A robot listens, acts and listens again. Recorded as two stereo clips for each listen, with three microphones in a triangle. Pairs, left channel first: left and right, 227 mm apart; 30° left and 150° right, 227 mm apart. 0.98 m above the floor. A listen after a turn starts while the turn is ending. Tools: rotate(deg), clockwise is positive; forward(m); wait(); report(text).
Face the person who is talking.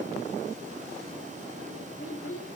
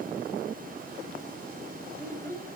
rotate(-110)
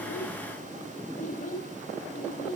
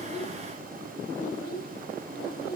rotate(-45)
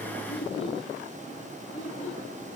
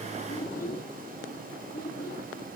rotate(-30)
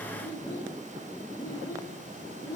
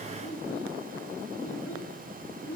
rotate(-15)
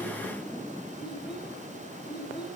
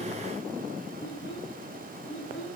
report("Facing the child speaking, 2 to 4 m away.")